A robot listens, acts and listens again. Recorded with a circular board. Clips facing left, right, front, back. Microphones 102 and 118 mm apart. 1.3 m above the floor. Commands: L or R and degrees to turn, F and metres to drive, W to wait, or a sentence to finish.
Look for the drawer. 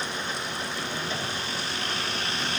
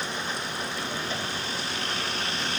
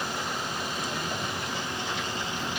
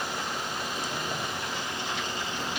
W
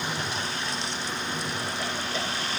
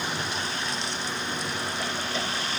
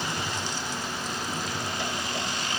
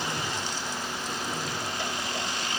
W
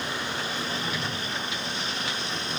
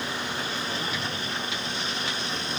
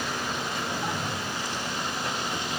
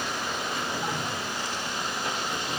I can't make out a drawer.